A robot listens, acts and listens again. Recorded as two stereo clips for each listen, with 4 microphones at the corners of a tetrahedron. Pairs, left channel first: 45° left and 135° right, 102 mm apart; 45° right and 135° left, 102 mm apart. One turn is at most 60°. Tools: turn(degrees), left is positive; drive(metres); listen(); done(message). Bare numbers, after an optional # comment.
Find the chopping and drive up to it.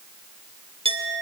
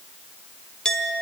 listen()
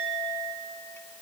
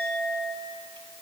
listen()
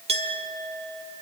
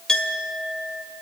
done("I can't make out chopping, only a clink.")